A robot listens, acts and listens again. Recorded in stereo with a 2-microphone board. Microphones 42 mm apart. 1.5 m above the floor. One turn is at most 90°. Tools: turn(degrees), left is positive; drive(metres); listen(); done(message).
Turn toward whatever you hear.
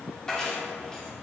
turn(degrees=15)
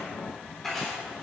turn(degrees=30)
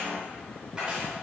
turn(degrees=-20)
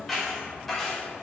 done("Found it: keys jangling, straight ahead, over 4 m away.")